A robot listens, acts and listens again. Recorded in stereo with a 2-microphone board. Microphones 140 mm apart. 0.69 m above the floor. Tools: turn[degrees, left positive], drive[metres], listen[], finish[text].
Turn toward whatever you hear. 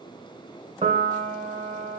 Thought: The piano: about 50° right or 130° right.
Action: turn[-50]
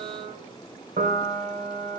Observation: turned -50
Thought: So it is at 80° right.
Action: turn[-80]
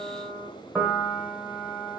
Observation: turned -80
Action: finish[Facing the piano, 1 to 2 m away.]